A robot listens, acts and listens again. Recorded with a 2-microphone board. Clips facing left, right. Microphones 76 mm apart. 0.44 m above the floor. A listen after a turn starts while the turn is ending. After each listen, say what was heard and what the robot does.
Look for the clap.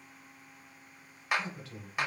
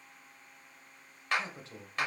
Turn 30° left.
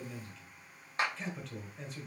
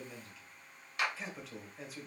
So it is at 140° left. Turn 140° left.
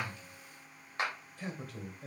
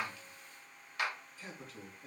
The clap is now 40° left. Turn 40° left.
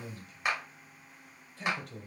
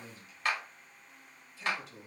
The clap is now 15° left. Turn 15° left.
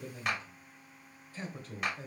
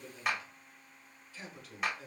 Found it: a clap, straight ahead, 1 to 2 m away.